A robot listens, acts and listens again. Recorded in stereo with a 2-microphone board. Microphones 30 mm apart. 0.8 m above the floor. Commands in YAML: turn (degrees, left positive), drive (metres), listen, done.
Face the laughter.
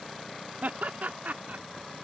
turn: -70
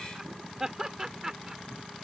turn: -20
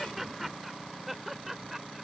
turn: -10
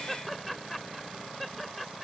done: "Found it: laughter, straight ahead."